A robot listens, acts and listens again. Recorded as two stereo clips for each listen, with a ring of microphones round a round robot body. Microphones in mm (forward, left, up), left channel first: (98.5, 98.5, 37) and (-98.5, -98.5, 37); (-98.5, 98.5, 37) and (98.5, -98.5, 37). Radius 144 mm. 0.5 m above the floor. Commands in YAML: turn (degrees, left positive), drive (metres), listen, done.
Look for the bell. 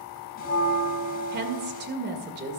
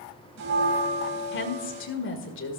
turn: -15
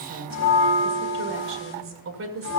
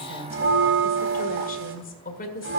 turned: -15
done: "Found it: a bell, straight ahead."